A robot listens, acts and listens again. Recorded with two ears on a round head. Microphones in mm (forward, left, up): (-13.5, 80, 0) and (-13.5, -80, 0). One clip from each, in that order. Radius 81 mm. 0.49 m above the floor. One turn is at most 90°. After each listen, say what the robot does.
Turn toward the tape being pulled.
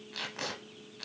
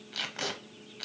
Turn 15° right.
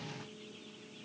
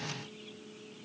Keep listening.
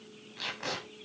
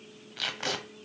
Turn 90° right.
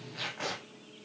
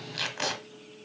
Turn 70° right.
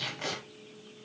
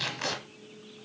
Turn 15° right.
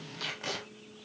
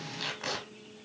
Facing the tape being pulled, under 1 m away.